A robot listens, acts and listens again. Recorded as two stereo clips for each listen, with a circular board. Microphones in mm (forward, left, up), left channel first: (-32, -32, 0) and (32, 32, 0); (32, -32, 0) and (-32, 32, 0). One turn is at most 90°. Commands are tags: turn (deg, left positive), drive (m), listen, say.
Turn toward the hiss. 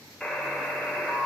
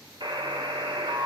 <listen/>
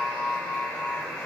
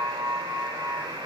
<listen/>
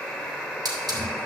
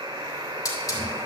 <say>Facing the hiss.</say>